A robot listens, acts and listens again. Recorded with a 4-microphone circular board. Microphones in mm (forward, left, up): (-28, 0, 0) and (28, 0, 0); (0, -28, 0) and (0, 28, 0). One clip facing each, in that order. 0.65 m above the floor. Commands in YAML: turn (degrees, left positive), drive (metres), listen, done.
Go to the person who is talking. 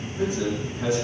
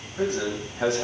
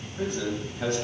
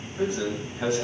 drive: 1.0
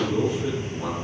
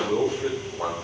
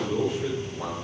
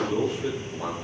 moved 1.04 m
drive: 1.0
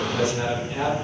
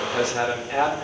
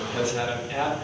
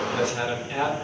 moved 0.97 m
drive: 1.0
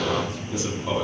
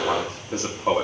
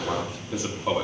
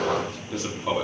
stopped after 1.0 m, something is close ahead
done: "Arrived at the man speaking, straight ahead."